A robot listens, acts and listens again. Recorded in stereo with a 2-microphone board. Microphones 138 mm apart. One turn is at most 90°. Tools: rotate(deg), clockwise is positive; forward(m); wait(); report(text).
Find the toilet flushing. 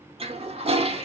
rotate(45)
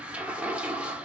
rotate(10)
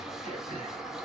report("Found it: a toilet flushing, straight ahead.")